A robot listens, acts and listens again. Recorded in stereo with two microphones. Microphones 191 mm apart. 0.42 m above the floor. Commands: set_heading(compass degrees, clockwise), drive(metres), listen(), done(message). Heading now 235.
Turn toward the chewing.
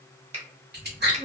set_heading(295)
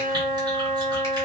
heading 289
listen()
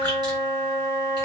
listen()
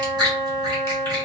set_heading(314)
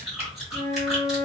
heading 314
done("Facing the chewing.")